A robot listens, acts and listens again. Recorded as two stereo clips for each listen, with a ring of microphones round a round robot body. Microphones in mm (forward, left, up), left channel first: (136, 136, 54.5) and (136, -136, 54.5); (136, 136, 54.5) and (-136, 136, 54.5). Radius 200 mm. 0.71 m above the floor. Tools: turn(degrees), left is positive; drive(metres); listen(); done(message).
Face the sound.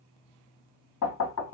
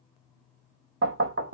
turn(degrees=135)
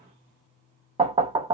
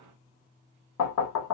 turn(degrees=-20)
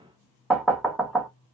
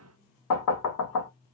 done("Facing the knocking, under 1 m away.")